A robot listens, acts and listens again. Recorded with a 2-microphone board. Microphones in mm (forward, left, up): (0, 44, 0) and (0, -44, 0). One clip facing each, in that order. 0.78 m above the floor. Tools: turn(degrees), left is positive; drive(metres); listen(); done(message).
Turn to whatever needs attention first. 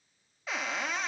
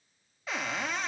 listen()
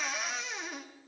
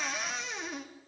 listen()
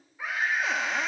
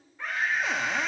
turn(degrees=30)
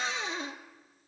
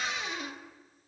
listen()
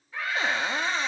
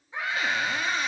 turn(degrees=-20)
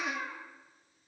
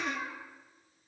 done("Facing the scream.")